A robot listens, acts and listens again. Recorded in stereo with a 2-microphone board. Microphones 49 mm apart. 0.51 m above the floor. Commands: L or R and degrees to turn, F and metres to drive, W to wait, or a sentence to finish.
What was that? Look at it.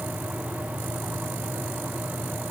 W
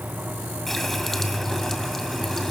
L30
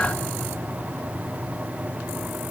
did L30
W
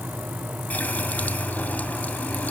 L145
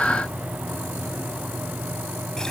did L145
W
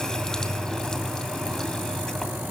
L15
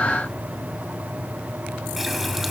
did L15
Facing the running tap, 2 to 4 m away.